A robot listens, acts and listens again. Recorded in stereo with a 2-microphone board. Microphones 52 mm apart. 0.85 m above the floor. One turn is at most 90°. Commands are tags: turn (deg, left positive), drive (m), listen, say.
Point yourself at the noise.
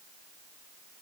<listen/>
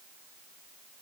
<listen/>
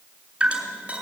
<turn deg="-20"/>
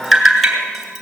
<say>Found it: dripping, straight ahead.</say>